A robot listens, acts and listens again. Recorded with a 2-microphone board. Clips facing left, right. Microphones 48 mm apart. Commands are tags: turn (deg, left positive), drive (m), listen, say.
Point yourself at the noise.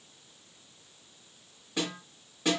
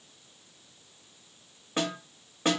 <turn deg="-40"/>
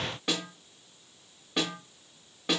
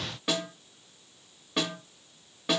<say>Found it: a snare drum, straight ahead.</say>